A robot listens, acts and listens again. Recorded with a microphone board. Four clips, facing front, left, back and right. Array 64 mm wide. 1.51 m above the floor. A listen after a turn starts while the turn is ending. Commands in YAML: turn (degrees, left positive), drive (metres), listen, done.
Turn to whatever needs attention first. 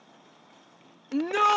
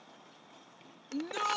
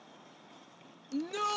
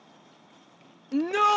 turn: -50
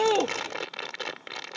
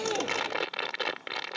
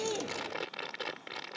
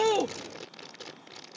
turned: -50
listen: true
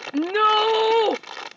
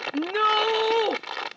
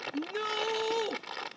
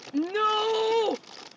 turn: 10
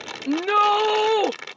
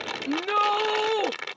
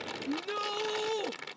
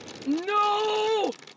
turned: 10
done: "Facing the shout."